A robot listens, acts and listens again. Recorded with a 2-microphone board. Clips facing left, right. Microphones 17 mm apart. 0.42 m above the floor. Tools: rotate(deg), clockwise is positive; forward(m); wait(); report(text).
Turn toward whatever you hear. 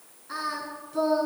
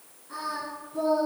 rotate(-90)
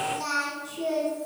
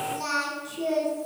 rotate(10)
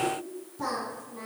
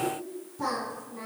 rotate(10)
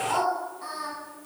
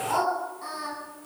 report("Facing the singing.")